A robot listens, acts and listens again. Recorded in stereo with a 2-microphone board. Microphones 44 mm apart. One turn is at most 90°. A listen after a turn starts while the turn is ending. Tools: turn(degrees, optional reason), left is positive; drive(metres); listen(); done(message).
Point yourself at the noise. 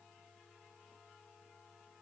listen()
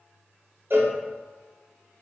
turn(degrees=-55, reason="The cowbell: about 55° right or 125° right.")
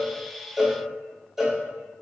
turn(degrees=-10, reason="So it is at 10° right.")
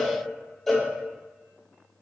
done("Facing the cowbell, under 1 m away.")